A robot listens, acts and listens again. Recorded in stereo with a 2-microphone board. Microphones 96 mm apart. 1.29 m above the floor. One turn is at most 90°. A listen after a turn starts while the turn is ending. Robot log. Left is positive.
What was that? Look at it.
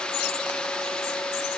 cmd idle
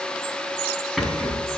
cmd yaw +30
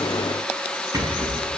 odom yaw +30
note: So it is at 35° right.
cmd yaw -35
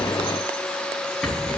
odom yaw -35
end: Facing the rattle.